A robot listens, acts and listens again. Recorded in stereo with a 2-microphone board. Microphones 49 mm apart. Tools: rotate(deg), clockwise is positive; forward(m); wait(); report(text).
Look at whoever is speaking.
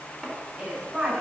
rotate(30)
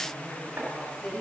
rotate(-20)
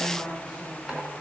report("Found it: a woman speaking, straight ahead.")